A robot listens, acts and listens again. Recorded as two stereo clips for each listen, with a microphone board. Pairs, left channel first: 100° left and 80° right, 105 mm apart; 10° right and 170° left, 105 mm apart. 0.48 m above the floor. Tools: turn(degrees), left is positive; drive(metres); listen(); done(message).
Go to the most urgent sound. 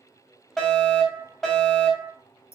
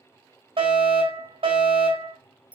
turn(degrees=-175)
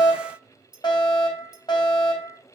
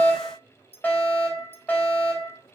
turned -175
turn(degrees=60)
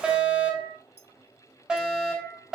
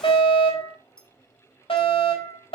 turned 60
drive(metres=1.0)
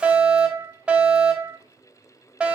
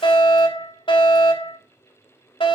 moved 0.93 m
drive(metres=1.0)
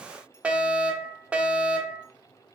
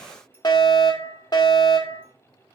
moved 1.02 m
drive(metres=1.0)
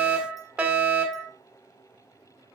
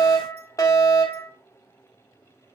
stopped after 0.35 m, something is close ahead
turn(degrees=-10)
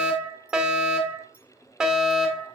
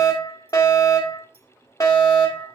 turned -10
done("I am next to the fire alarm.")